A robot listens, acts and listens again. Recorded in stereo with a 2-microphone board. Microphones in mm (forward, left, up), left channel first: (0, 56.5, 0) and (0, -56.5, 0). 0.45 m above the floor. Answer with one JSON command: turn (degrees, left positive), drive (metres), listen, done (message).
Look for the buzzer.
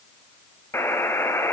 {"turn": 20}
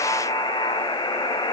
{"turn": 140}
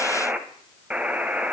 {"turn": -10}
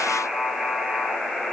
{"done": "Found it: a buzzer, straight ahead."}